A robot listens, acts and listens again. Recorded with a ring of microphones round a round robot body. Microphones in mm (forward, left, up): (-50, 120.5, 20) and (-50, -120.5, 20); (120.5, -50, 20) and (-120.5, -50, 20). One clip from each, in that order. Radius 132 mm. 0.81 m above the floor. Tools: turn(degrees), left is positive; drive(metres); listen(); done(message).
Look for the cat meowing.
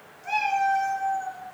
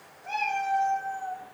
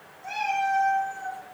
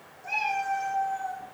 turn(degrees=75)
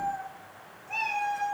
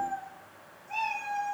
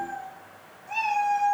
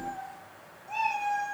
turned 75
turn(degrees=10)
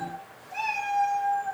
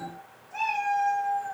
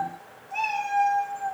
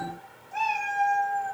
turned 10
done("Found it: a cat meowing, straight ahead.")